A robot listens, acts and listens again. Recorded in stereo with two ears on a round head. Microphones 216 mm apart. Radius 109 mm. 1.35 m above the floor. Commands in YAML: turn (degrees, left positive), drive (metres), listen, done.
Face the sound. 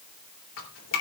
turn: 55
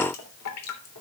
turn: 70
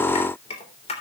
turn: 25
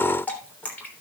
done: "Found it: dripping, straight ahead."